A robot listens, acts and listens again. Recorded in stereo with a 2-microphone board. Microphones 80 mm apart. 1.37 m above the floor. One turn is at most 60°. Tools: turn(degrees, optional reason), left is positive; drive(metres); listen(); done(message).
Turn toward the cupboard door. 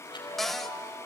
turn(degrees=30)
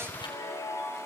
listen()
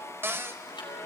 turn(degrees=-30, reason="So it is at 30° right.")
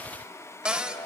turn(degrees=-15, reason="The cupboard door is now 15° right.")
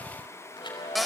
done("Found it: a cupboard door, straight ahead, under 1 m away.")